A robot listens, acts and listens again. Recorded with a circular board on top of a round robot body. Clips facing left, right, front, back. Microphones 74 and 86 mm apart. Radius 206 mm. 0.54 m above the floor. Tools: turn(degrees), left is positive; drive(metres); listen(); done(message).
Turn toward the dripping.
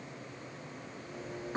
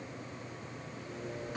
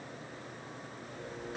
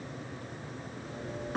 turn(degrees=145)
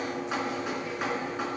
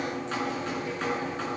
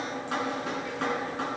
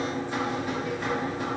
turn(degrees=10)
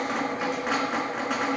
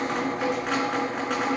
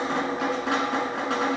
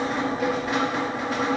done("Facing the dripping.")